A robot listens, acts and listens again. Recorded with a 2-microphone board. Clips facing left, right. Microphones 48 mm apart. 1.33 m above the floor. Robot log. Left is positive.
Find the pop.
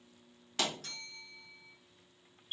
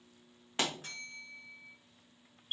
note: The pop: about 25° right or 155° right.
cmd yaw -25
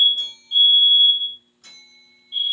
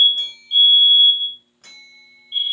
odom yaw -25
cmd idle
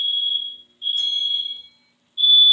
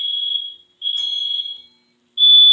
end: I heard a pop, but can't make it out now. It was about straight ahead or 130° right.